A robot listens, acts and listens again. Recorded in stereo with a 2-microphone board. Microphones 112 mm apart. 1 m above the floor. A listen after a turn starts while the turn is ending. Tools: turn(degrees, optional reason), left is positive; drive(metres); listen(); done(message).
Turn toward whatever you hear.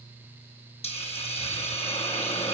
turn(degrees=65, reason="The hiss: about 65° left or 115° left.")
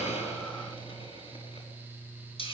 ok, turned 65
turn(degrees=50, reason="So it is at 50° left.")
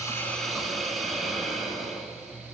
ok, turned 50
done("Found it: a hiss, straight ahead.")